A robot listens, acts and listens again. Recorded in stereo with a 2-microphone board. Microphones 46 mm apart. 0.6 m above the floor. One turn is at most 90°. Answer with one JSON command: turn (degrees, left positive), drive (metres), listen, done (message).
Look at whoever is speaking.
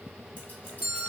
{"listen": true}
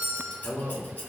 {"turn": 60}
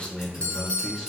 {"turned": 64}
{"turn": 15}
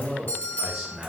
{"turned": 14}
{"turn": -10}
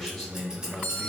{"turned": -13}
{"done": "Found it: a man speaking, straight ahead, 2 to 4 m away."}